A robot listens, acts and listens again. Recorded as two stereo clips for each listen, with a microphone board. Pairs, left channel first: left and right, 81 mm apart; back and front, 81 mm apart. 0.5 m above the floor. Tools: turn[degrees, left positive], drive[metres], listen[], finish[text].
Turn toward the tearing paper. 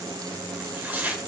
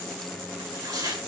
Thought: The tearing paper: 30° right.
Action: turn[-30]
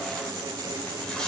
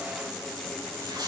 Thought: The tearing paper is now 10° left.
Action: turn[10]
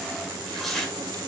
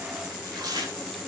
Action: finish[Found it: tearing paper, straight ahead, 1 to 2 m away.]